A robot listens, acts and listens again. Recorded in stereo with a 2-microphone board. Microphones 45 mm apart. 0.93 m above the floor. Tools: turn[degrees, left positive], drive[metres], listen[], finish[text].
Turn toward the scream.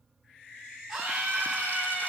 Action: turn[-30]
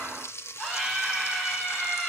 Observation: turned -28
Thought: So it is at 20° left.
Action: turn[20]
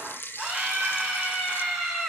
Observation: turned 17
Action: finish[Found it: a scream, straight ahead.]